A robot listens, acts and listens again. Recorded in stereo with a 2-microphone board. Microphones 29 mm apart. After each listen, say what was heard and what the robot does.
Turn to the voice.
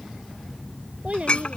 The child speaking: about 50° right or 130° right. Turn 50° right.
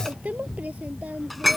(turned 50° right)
So it is at 85° right. Turn 85° right.
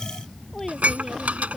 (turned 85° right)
The child speaking is now 15° left. Turn 15° left.
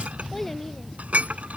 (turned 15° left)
Facing the child speaking.